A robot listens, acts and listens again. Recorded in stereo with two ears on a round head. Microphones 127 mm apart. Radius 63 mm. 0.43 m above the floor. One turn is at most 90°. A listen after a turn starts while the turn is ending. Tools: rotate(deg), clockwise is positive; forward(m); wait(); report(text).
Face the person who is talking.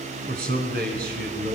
rotate(70)
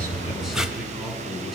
report("Found it: a man speaking, straight ahead.")